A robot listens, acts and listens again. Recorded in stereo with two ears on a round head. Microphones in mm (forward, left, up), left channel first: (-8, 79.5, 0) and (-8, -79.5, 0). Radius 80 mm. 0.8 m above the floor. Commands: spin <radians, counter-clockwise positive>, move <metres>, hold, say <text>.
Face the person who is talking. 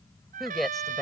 spin 0.52
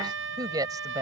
spin -0.35
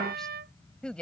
say Facing the woman speaking.